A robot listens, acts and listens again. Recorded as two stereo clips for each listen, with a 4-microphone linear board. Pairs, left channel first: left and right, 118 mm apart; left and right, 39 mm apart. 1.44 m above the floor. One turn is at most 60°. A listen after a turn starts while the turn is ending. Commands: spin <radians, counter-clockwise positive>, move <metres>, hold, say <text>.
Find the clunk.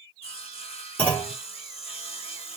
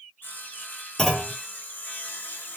spin 0.52
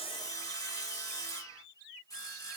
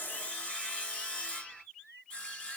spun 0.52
hold
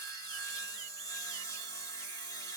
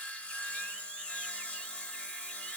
say I heard a clunk, but can't make it out now. It was about 15° right or 135° left.